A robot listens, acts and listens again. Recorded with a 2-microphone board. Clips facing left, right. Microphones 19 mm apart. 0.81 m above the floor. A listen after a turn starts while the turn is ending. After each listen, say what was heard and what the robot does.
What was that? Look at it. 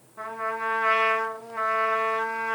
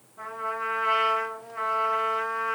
The trumpet: about 30° left or 150° left. Turn 30° left.
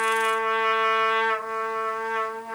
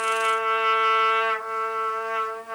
Found it: a trumpet, straight ahead, 1 to 2 m away.